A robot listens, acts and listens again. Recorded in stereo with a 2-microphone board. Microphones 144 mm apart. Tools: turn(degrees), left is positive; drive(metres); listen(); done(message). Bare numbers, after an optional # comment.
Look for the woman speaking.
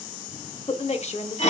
# The woman speaking: about 55° left or 125° left.
turn(55)
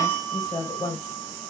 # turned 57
# So it is at 25° left.
turn(25)
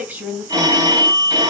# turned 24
# The woman speaking is now 15° right.
turn(-15)
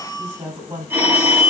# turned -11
# The woman speaking is now 15° right.
turn(-15)
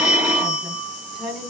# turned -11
done("Facing the woman speaking.")